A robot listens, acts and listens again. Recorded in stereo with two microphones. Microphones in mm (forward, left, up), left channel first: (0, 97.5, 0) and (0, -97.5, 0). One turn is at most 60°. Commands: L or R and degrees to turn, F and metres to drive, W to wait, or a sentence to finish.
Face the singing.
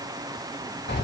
W
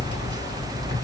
W
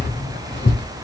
I can't make out singing to turn to.